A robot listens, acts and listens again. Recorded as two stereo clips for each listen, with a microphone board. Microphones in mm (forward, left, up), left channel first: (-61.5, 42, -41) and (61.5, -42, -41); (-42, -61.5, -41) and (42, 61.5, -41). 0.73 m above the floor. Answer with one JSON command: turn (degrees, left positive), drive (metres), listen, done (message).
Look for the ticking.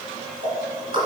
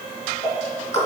{"turn": -85}
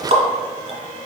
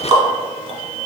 {"done": "Found it: ticking, straight ahead, 1 to 2 m away."}